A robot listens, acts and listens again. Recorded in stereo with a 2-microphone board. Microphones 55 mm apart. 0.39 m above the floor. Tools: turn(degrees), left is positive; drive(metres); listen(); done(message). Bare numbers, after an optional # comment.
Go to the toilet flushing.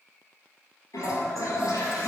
turn(90)
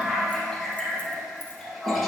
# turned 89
drive(1.0)
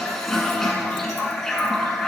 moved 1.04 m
drive(1.0)
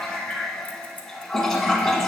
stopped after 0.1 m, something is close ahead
done("I am next to the toilet flushing.")